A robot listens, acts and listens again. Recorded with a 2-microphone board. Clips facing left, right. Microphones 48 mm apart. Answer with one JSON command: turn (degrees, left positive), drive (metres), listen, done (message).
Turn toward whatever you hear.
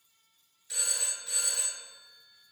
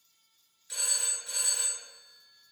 {"turn": 30}
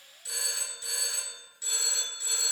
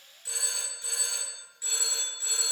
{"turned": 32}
{"turn": -30}
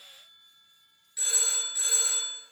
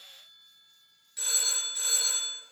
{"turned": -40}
{"turn": 10}
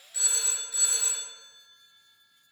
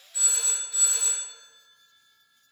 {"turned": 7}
{"done": "Found it: a phone ringing, straight ahead, 1 to 2 m away."}